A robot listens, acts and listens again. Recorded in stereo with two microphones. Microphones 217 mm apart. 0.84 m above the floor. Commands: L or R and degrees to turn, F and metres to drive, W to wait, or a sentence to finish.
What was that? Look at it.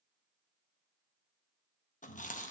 L35
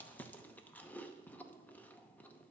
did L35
L10
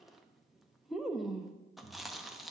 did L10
Found it: chewing, straight ahead.